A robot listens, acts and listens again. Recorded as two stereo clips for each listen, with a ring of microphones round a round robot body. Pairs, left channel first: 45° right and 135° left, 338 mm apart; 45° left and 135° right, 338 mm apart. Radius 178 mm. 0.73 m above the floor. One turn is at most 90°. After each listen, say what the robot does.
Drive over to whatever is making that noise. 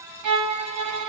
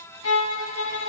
Turn 90° left.
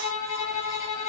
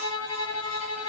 Drive 1.0 m forward.
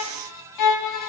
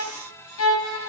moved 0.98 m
Drive 1.0 m forward.
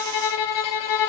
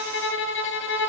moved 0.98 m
Turn 10° right.
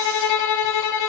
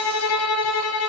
Drive 1.0 m forward.
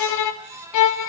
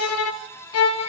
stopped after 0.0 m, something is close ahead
I am next to the violin.